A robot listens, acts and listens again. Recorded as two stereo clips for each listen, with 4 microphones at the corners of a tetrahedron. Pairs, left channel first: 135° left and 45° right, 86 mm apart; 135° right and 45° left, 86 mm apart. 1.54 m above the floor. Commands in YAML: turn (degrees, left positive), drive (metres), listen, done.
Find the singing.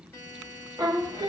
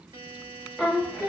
turn: -30
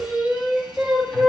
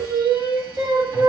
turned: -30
turn: 55
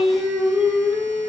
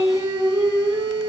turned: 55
turn: 45
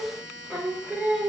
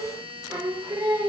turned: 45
turn: 25
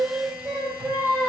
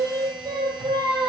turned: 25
done: "Facing the singing."